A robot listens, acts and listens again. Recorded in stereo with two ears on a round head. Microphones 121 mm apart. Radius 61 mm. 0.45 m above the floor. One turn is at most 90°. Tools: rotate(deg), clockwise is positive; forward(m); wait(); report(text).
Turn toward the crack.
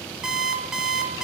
wait()
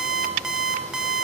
wait()
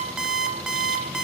report("I can't make out a crack to turn to.")